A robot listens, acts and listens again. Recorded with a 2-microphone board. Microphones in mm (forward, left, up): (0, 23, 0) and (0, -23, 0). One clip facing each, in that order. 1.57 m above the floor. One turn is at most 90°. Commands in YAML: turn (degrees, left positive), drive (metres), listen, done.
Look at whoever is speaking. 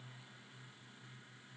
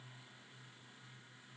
listen: true
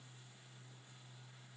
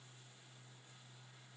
listen: true
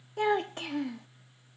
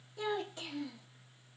turn: 60
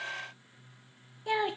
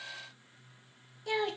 turn: 20
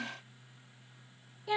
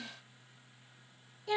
turn: 10
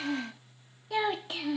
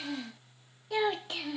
done: "Facing the child speaking, under 1 m away."